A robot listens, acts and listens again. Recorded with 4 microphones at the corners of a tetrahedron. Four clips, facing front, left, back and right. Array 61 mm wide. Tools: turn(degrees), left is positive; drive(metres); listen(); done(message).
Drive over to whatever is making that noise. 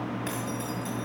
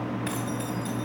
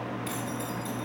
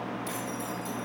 turn(degrees=60)
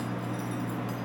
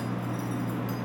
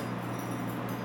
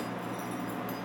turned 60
listen()
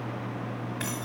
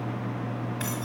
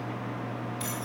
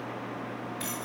turn(degrees=35)
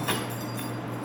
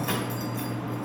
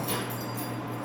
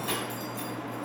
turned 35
turn(degrees=20)
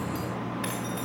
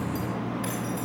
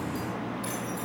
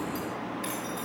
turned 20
drive(metres=1.0)
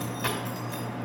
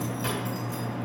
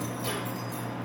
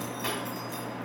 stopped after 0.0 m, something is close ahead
done("Blocked. The keys jangling is further on, straight ahead.")